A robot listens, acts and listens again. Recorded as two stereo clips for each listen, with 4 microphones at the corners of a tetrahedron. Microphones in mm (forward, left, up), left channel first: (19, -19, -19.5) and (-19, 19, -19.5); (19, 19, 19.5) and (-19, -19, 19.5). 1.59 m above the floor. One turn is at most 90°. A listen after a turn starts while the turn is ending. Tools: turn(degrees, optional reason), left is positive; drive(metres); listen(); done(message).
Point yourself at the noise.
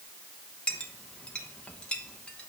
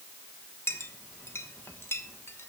turn(degrees=20, reason="The clink: 20° left.")
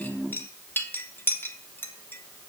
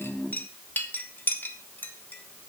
done("Found it: a clink, straight ahead.")